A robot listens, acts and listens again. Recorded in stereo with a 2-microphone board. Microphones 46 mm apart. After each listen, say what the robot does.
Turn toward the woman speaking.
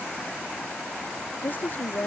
Turn 45° left.
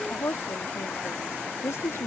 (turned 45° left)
Turn 90° left.
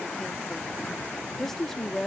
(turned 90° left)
Found it: a woman speaking, straight ahead.